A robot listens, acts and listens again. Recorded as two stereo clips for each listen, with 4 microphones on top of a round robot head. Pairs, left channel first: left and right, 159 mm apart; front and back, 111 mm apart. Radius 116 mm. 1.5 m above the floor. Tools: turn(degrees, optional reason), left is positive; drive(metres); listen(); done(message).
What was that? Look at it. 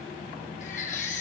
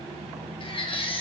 turn(degrees=35, reason="The baby crying: 35° left.")
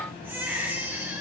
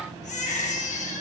turn(degrees=-10, reason="The baby crying is now 10° right.")
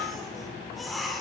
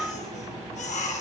done("Found it: a baby crying, straight ahead, 2 to 4 m away.")